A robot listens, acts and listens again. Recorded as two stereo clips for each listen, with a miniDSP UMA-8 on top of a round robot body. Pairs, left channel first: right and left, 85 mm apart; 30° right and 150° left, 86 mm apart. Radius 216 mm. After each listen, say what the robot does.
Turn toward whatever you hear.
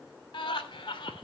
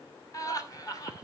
Turn 80° right.
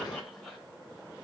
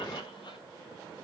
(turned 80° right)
Keep listening.
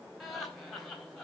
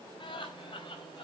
Facing the laughter, 2 to 4 m away.